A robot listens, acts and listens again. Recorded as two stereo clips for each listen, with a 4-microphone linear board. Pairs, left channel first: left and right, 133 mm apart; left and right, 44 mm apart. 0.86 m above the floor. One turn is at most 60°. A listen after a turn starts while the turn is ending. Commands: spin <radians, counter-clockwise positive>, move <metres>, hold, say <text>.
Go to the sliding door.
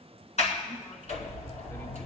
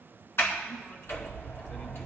spin 1.05
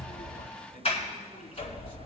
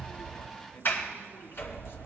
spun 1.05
spin 0.87
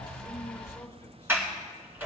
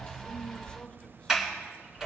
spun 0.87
spin -0.26
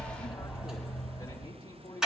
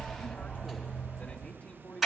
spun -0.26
move 1.0
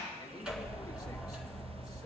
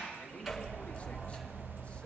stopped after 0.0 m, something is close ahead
spin -0.17
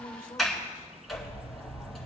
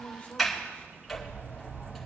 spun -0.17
say Something is in my way. I am facing the sliding door but have not reached it.